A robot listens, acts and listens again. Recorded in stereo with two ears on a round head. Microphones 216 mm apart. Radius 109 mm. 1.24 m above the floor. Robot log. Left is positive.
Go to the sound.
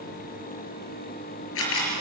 note: The camera shutter: about 60° left or 120° left.
cmd yaw +60
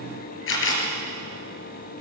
note: So it is at 55° left.
cmd yaw +55
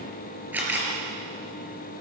cmd fwd 1.0
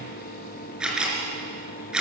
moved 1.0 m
cmd fwd 1.0
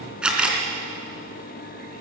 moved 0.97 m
cmd fwd 1.0
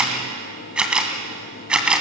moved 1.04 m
cmd fwd 1.0
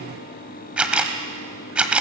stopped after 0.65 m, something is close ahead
end: I am next to the camera shutter.